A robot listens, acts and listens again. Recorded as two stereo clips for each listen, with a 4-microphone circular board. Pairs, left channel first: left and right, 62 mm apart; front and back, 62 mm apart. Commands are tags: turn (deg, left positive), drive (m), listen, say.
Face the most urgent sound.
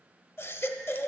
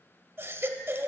<turn deg="135"/>
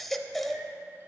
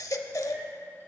<say>Facing the baby crying.</say>